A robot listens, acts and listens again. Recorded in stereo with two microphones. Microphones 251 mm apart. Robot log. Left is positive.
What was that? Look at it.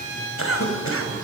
note: The cough: about 60° left or 120° left.
cmd yaw +60
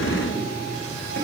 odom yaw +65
note: So it is at 55° left.
cmd yaw +55
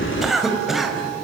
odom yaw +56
end: Facing the cough.